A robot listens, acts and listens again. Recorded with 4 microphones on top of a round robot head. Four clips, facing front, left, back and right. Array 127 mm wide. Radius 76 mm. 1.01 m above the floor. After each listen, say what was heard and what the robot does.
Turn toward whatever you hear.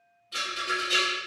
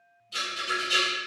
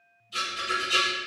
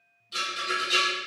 The rattle: 20° right. Turn 20° right.
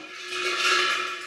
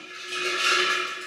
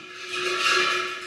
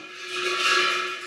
The rattle is now 10° left. Turn 10° left.
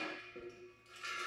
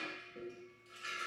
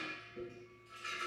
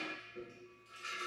Keep listening.
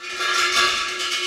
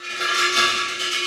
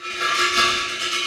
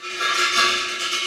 Found it: a rattle, straight ahead.